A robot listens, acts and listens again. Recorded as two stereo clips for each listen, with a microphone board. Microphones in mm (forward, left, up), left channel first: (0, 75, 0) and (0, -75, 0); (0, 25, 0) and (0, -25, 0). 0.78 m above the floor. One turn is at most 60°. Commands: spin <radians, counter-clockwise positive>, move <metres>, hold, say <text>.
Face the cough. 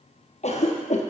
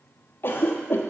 spin 0.87
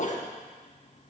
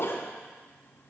spin 1.05
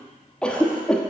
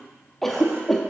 say Facing the cough, 1 to 2 m away.